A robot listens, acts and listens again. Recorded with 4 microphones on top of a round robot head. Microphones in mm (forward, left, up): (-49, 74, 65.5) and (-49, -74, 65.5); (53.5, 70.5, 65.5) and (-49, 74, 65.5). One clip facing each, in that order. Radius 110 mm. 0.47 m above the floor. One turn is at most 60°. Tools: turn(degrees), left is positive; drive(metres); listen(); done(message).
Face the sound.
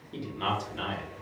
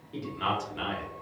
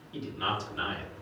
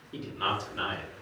turn(degrees=60)
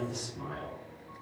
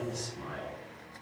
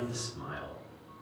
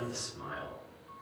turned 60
turn(degrees=60)
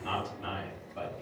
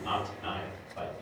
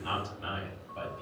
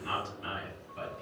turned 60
turn(degrees=10)
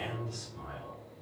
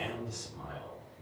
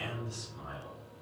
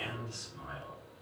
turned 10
done("Found it: a man speaking, straight ahead, 2 to 4 m away.")